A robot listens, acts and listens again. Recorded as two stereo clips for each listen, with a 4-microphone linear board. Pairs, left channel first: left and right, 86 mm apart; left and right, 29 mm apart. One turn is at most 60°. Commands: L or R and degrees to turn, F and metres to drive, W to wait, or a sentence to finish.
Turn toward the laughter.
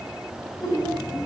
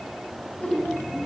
L60
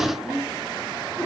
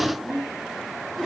L15
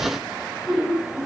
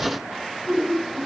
Found it: laughter, straight ahead, over 4 m away.